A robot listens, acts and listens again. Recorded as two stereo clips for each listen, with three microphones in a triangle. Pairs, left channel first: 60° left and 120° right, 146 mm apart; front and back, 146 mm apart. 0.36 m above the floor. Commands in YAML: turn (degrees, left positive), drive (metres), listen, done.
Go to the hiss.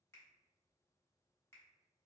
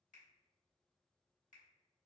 listen: true
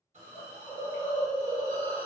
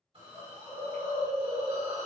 turn: -140
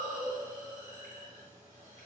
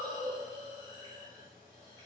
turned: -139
drive: 1.0
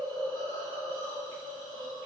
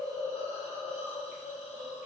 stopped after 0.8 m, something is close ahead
done: "Arrived at the hiss, straight ahead."